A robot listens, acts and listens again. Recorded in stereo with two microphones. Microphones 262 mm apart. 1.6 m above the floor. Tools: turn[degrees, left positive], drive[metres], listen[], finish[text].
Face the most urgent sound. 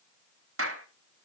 Action: listen[]
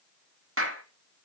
Action: listen[]
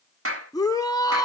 Action: turn[30]
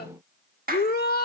Thought: So it is at 135° left.
Action: turn[135]
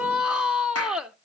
Action: finish[Facing the shout.]